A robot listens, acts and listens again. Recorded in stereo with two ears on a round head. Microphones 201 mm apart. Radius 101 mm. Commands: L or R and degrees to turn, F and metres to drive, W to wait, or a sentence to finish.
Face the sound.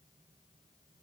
W
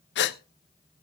L50
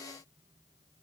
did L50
W
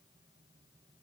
I heard a gasp, but can't make it out now. It was about straight ahead or 80° left.